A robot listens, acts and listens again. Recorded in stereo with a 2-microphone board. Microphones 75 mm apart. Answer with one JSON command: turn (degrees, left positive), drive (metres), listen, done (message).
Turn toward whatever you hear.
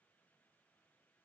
{"listen": true}
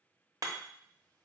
{"turn": -65}
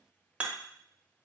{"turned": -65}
{"turn": -20}
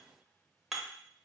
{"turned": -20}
{"done": "Facing the hammering."}